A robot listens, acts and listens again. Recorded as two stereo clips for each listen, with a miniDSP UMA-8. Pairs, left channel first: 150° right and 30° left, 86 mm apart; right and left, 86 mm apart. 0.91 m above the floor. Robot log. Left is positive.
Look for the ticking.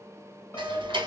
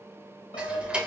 note: The ticking: 15° left.
cmd yaw +15
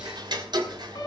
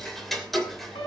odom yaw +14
end: Facing the ticking, 2 to 4 m away.